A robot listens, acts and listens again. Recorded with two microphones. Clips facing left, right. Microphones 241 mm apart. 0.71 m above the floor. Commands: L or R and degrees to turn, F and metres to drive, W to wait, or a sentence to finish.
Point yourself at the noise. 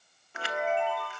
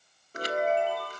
R40
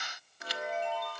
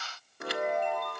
R90
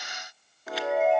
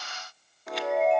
Found it: a chime, straight ahead.